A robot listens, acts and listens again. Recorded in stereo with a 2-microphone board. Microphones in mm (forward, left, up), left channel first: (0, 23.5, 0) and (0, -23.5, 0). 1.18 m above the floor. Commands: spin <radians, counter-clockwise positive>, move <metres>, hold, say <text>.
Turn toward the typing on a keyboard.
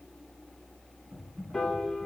spin -1.22
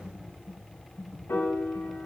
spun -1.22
spin -0.17
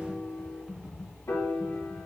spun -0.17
say Found it: typing on a keyboard, straight ahead, 2 to 4 m away.